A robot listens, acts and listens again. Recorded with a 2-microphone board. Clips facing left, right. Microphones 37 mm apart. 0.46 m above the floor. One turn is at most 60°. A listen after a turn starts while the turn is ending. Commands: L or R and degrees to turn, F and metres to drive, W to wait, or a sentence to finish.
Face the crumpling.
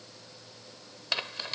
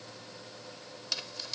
L40
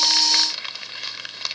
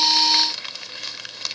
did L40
L10
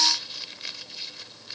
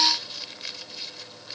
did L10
Found it: crumpling, straight ahead.